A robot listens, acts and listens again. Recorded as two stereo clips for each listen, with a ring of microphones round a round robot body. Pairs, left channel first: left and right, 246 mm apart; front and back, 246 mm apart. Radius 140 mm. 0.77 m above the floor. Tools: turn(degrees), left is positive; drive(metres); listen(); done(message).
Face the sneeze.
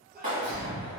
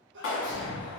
turn(degrees=-140)
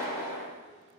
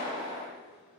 done("I heard a sneeze from this way, but can't make it out now.")